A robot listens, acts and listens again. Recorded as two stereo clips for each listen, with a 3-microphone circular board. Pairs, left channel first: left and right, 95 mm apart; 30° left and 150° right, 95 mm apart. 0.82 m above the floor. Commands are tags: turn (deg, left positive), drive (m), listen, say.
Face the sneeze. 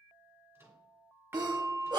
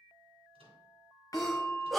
<turn deg="-60"/>
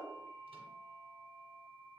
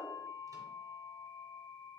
<say>I heard a sneeze from this way, but can't make it out now.</say>